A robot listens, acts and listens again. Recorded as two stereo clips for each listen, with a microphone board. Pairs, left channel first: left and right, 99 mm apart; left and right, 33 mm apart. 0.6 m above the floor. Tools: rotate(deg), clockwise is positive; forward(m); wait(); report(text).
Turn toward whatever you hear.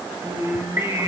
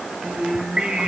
rotate(25)
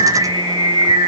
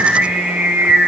rotate(130)
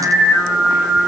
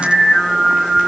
rotate(10)
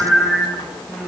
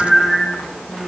report("Facing the singing.")